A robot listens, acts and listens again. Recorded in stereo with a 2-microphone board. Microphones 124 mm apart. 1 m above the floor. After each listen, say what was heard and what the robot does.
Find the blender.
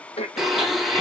Turn 30° left.
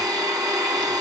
So it is at 35° right. Turn 35° right.
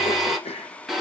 Found it: a blender, straight ahead.